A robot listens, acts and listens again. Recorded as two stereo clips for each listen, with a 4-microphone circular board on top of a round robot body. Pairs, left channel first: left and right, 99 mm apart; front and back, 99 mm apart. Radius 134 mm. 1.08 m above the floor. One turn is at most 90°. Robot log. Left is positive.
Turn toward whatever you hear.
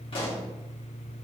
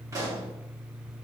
note: The pop: 120° left.
cmd yaw +90
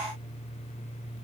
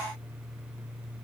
note: Nothing new. It was at 30° left.
cmd yaw +30
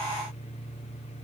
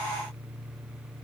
end: I heard a pop from this way, but can't make it out now.